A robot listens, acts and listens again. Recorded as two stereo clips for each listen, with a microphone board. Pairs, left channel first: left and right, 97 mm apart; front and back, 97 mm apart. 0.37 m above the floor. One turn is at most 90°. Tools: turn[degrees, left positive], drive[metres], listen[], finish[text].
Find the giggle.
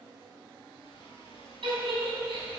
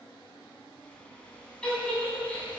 Thought: The giggle: 80° right.
Action: turn[-80]
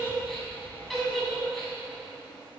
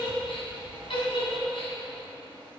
Action: finish[Found it: a giggle, straight ahead, 2 to 4 m away.]